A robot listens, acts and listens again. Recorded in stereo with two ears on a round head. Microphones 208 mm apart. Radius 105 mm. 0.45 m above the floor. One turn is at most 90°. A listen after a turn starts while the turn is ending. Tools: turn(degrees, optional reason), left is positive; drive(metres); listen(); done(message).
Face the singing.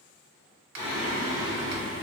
turn(degrees=65, reason="The singing: about 65° left or 115° left.")
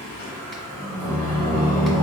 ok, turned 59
turn(degrees=20, reason="So it is at 20° left.")
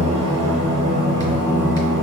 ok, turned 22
done("Found it: singing, straight ahead.")